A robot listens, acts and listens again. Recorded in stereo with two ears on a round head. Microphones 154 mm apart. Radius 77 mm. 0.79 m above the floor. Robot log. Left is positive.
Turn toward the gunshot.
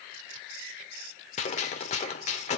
note: The gunshot: about 40° left or 140° left.
cmd yaw +40
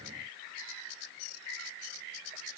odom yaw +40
cmd idle
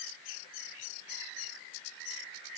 end: I heard a gunshot, but can't make it out now. It was about straight ahead or 100° left.